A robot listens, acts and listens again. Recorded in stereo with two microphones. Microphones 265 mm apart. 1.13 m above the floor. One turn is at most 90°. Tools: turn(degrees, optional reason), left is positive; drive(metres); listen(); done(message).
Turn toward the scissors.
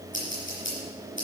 turn(degrees=45, reason="The scissors: about 45° left or 135° left.")
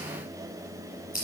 turn(degrees=85, reason="So it is at 85° left.")
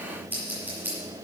done("Found it: scissors, straight ahead.")